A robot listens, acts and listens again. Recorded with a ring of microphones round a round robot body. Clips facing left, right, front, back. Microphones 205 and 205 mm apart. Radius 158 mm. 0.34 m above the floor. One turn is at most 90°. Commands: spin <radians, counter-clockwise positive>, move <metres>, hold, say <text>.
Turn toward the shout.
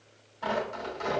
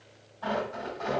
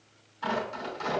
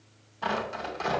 hold
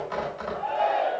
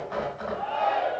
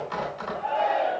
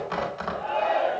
spin -1.57
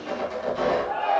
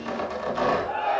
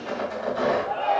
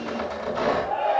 spin -0.61
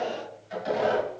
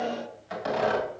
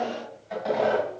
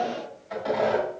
spin -0.17
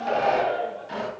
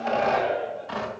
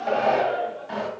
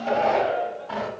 say Facing the shout.